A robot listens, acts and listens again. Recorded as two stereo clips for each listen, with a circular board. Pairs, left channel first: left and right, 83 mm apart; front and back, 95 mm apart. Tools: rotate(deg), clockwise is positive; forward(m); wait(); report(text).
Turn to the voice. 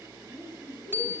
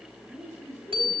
rotate(-120)
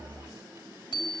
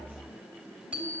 wait()
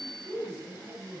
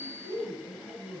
rotate(-30)
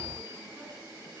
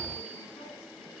wait()
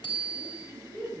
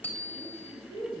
report("Found it: a man speaking, straight ahead, over 4 m away.")